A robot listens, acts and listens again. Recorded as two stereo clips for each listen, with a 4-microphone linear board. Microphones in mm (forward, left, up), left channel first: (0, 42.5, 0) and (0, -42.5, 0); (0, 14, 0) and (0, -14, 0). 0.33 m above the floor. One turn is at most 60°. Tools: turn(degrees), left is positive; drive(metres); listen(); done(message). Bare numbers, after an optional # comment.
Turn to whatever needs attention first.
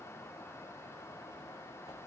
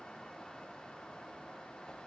listen()
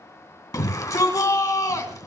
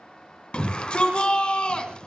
# The shout: about 45° left or 135° left.
turn(45)
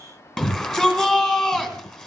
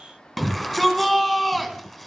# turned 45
# So it is at 10° left.
turn(10)
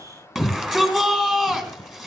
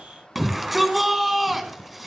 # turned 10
done("Facing the shout.")